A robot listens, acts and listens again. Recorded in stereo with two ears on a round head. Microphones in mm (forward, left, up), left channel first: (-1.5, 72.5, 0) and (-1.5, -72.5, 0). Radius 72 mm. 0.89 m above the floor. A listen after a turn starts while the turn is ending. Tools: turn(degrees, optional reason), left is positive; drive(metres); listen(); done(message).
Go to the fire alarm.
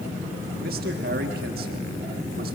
listen()
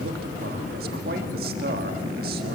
listen()
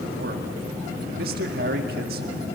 done("I can't make out a fire alarm, only a man speaking.")